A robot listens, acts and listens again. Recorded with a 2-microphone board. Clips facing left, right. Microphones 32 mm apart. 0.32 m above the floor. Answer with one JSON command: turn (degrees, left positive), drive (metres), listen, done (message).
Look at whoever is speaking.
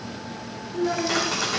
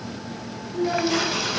{"turn": 20}
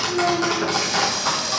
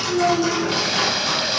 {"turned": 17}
{"done": "Facing the child speaking."}